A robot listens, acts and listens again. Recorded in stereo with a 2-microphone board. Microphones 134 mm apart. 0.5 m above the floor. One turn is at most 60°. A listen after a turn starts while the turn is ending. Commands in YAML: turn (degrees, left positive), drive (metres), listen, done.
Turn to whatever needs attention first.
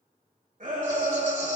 turn: -60
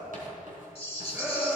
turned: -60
turn: -15
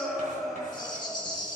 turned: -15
done: "Found it: a shout, straight ahead, 2 to 4 m away."